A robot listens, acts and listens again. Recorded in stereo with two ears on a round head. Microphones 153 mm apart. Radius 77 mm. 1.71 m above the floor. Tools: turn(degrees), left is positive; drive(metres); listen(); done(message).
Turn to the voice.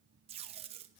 listen()
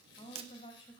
turn(degrees=40)
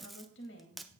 turn(degrees=100)
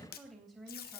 done("Facing the woman speaking, 2 to 4 m away.")